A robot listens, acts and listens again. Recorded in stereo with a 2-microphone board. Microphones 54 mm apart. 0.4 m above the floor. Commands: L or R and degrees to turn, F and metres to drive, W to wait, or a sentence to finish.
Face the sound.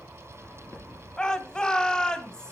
L30
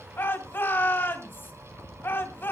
L135
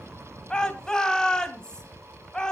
L15
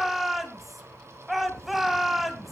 Facing the shout.